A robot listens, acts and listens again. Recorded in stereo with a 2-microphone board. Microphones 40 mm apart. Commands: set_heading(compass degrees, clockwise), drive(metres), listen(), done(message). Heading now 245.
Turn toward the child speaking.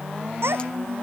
set_heading(335)
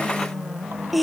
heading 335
done("Facing the child speaking.")